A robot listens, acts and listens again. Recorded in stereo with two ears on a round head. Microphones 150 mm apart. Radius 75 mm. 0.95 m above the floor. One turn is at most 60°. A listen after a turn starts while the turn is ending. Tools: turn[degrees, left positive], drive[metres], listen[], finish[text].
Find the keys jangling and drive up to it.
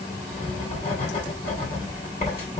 Action: listen[]
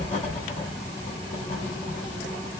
Action: listen[]
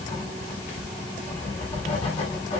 Action: finish[I can't make out keys jangling to turn to.]